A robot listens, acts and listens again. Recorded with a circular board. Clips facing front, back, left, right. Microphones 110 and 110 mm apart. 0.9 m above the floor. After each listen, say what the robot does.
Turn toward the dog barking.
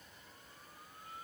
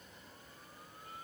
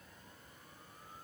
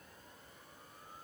Keep listening.
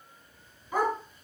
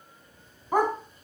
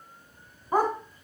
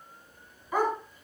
Turn 140° left.
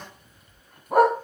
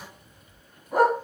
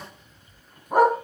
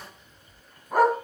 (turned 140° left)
Turn 20° left.
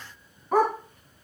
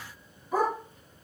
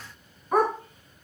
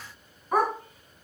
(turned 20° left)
Facing the dog barking.